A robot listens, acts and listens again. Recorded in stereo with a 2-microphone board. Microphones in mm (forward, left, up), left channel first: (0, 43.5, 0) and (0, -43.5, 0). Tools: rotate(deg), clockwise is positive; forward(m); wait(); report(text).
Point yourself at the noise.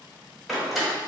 rotate(-30)
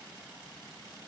wait()
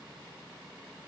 report("I heard a door slam, but can't make it out now. It was about 30° right or 150° left.")